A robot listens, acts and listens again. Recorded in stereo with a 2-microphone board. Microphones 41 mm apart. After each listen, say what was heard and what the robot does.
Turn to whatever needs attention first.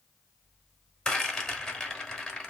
Keep listening.
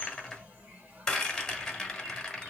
Keep listening.
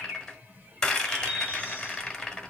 I can't make out anything urgent to turn to.